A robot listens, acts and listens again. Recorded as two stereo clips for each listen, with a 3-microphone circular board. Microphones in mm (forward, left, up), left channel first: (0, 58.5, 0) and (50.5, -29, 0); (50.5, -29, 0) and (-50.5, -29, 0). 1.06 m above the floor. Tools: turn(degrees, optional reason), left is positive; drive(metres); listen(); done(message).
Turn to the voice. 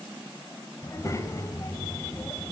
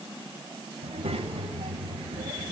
turn(degrees=180, reason="The child speaking: straight behind.")
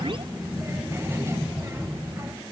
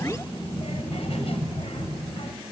done("Facing the child speaking.")